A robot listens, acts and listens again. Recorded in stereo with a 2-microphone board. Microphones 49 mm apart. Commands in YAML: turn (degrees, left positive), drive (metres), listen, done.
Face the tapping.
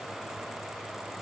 listen: true
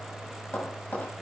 turn: 35
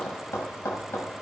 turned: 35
turn: 110
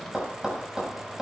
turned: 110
turn: -15
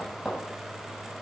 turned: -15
done: "Found it: tapping, straight ahead."